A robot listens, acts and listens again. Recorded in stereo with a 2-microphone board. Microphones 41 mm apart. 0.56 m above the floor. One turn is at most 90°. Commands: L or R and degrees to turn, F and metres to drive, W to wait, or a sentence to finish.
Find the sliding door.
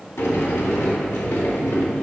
L90
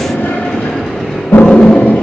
L15
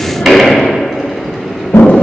Facing the sliding door, 2 to 4 m away.